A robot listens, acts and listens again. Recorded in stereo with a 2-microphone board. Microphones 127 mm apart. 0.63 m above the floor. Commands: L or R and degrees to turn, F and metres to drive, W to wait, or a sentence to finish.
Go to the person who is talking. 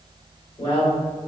L55
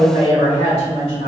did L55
L60
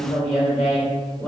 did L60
F1.0
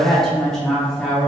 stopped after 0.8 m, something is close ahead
I am next to the woman speaking.